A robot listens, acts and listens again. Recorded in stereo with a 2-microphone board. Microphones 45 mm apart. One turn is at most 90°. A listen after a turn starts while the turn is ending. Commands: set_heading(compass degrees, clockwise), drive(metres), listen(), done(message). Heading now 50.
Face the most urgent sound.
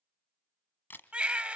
set_heading(75)
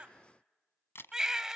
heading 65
set_heading(75)
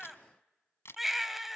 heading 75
done("Found it: a baby crying, straight ahead.")